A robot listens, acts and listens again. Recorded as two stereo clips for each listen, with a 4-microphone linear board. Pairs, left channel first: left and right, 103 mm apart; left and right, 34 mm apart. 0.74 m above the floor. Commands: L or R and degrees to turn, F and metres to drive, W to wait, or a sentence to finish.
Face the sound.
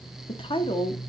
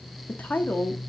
L55
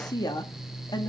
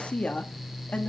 L45
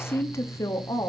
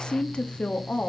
L35
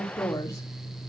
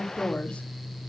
L30
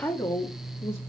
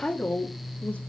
L30
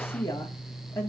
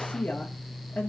L25
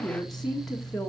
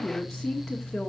Found it: a woman speaking, straight ahead.